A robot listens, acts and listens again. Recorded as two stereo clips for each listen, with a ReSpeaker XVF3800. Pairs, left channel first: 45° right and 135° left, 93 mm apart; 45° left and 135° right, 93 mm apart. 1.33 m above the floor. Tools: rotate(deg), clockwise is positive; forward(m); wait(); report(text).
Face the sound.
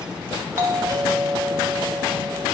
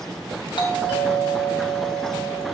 rotate(-75)
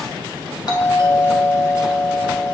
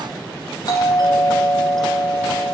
report("Found it: a doorbell, straight ahead.")